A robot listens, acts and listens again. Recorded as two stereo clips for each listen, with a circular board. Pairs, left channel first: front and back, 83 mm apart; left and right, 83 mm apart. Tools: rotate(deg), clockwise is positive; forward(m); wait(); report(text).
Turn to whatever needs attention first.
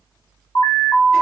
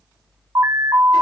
rotate(40)
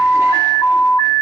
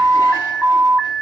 report("Facing the alarm.")